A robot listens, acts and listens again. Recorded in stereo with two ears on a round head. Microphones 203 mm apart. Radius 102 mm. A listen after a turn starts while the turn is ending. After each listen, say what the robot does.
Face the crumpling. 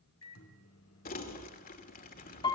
Turn 40° left.
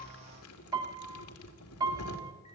Turn 100° left.
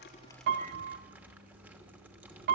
Turn 10° right.
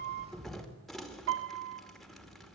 Facing the crumpling, 2 to 4 m away.